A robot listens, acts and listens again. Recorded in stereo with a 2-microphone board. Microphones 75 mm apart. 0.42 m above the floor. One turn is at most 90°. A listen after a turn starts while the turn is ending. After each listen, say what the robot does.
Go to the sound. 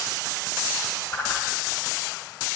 Turn 30° left.
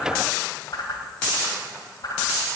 Turn 90° left.
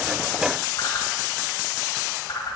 Turn 65° left.
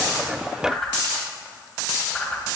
Turn 10° left.
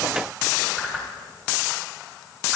Drive 1.0 m forward.
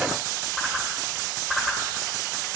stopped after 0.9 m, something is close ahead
I am next to the whoosh.